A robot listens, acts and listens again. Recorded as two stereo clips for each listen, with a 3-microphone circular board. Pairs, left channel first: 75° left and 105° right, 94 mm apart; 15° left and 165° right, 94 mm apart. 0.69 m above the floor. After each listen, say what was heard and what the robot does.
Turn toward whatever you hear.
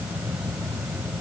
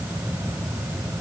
Keep listening.
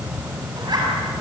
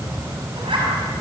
The zipper: 145° right. Turn 145° right.
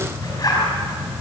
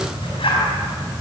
The zipper is now 30° left. Turn 30° left.
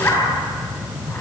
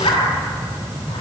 The zipper is now 10° left. Turn 10° left.
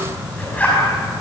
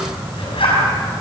Facing the zipper, over 4 m away.